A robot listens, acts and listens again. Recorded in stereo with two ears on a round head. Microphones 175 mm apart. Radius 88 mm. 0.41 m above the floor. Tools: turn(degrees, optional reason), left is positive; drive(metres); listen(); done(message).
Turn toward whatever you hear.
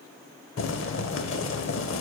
turn(degrees=65, reason="The boiling: about 65° left or 115° left.")
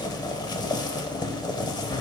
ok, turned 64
turn(degrees=20, reason="So it is at 20° left.")
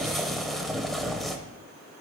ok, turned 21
done("Facing the boiling, under 1 m away.")